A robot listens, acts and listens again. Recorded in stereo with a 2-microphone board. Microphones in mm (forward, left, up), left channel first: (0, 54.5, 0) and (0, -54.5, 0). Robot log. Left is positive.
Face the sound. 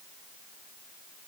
cmd idle
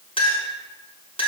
note: The clink: about 55° left or 125° left.
cmd yaw +55
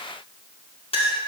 note: So it is at 65° left.
cmd yaw +65
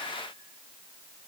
cmd idle
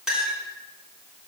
note: The clink is now 10° right.
cmd yaw -10
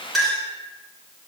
end: Found it: a clink, straight ahead.